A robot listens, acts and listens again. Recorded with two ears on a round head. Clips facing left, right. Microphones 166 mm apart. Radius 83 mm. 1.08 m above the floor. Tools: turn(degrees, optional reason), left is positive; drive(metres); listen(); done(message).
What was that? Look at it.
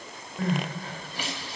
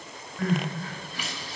turn(degrees=30, reason="The crying: about 30° left or 150° left.")
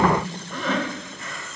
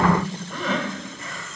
done("Facing the crying, 2 to 4 m away.")